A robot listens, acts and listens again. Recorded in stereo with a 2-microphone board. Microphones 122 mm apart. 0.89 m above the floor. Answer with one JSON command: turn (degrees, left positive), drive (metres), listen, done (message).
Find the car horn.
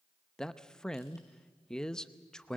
{"listen": true}
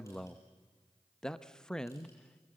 {"listen": true}
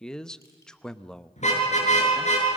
{"turn": 70}
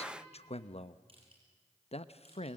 {"listen": true}
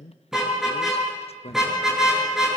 {"done": "Facing the car horn."}